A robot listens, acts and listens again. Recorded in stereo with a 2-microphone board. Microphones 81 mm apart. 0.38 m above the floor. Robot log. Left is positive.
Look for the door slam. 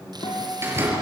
note: The door slam: about 30° right or 150° right.
cmd yaw -30
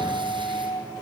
cmd idle
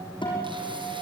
end: I heard a door slam, but can't make it out now. It was about straight ahead or 120° right.